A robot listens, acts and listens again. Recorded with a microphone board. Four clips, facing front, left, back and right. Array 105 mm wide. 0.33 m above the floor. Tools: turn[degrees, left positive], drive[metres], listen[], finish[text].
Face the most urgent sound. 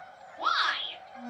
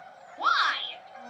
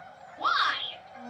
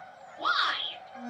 Thought: The shout: 80° left.
Action: turn[80]
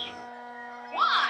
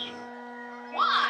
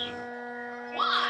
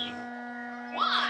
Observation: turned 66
Thought: The shout is now 10° left.
Action: turn[10]
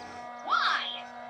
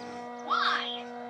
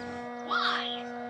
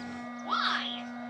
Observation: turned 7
Action: finish[Facing the shout.]